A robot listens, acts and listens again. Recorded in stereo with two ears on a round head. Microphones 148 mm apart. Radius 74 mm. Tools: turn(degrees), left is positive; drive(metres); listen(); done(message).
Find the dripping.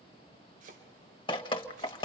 turn(degrees=30)
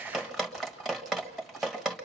done("Found it: dripping, straight ahead.")